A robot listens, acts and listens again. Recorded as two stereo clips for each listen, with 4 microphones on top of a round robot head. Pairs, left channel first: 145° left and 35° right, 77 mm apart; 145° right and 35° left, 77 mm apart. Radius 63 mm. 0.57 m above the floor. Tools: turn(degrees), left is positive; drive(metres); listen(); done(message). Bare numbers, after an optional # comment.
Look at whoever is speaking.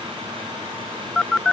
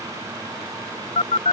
listen()
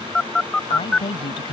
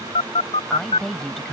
# The woman speaking: 130° left.
turn(130)
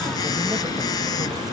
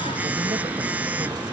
listen()
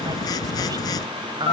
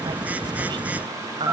done("Facing the woman speaking.")